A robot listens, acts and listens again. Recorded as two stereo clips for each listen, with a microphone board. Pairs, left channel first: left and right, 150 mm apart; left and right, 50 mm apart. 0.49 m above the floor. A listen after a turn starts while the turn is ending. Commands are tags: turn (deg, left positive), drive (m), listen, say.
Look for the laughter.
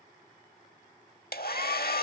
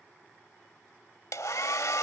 <listen/>
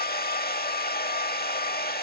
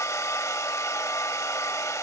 <listen/>
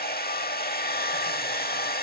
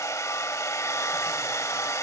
<say>I can't make out laughter, only a hair dryer.</say>